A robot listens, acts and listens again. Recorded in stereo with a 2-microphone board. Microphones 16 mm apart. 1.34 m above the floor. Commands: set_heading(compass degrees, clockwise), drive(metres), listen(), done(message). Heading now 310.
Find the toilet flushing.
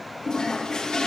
set_heading(245)
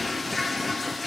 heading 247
set_heading(237)
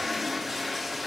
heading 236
done("Facing the toilet flushing.")